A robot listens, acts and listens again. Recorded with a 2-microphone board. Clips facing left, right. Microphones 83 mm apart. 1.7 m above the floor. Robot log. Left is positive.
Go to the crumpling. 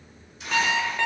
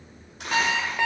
note: The crumpling: about 65° right or 115° right.
cmd yaw -65
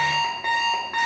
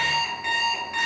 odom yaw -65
cmd idle
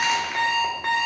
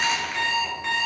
cmd idle
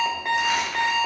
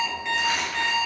end: I heard crumpling, but can't make it out now. It was about straight ahead or 50° right. I did not reach it.